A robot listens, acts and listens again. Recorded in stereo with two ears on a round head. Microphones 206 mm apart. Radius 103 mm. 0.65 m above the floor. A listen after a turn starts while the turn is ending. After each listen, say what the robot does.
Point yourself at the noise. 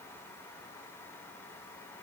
Keep listening.
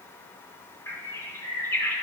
Turn 30° left.
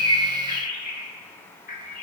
Turn 140° left.
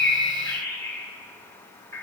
Turn 10° left.
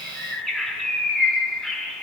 Facing the bird, 1 to 2 m away.